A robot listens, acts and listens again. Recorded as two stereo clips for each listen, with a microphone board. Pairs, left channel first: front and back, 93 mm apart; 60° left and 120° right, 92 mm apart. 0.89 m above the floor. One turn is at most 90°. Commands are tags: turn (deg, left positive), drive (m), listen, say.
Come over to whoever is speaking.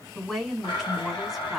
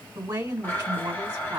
<turn deg="-85"/>
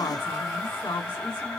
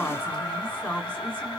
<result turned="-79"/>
<drive m="1.0"/>
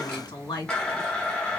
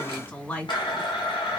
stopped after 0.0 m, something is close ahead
<say>Something is in my way. I am facing the woman speaking but have not reached it.</say>